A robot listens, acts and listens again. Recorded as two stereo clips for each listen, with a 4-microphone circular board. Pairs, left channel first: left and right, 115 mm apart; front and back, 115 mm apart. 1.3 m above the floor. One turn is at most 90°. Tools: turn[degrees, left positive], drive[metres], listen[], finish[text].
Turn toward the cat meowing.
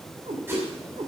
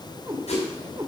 Thought: The cat meowing: 120° right.
Action: turn[-90]
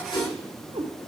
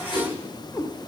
Thought: The cat meowing is now 65° right.
Action: turn[-65]
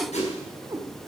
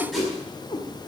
Thought: The cat meowing is now 40° right.
Action: turn[-40]
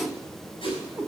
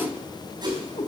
Thought: The cat meowing is now 20° right.
Action: turn[-20]
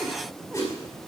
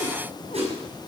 Action: listen[]
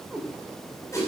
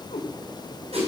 Thought: The cat meowing is now 10° right.
Action: turn[-10]
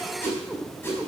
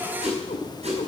Action: finish[Facing the cat meowing, 2 to 4 m away.]